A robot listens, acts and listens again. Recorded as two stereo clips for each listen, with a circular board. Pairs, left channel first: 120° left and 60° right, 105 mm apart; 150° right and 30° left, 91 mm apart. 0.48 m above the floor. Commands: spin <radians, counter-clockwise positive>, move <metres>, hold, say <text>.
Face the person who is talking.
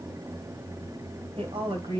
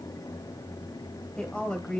spin -1.22
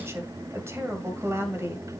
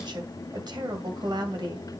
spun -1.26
say Found it: a woman speaking, straight ahead, 2 to 4 m away.